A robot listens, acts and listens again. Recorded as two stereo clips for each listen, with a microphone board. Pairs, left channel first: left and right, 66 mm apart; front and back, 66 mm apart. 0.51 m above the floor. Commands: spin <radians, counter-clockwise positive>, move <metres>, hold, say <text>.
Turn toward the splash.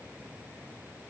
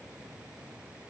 hold
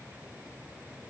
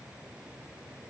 hold
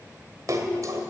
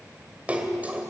spin -2.01
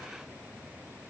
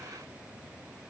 say Facing where the splash came from. I can't hear it now.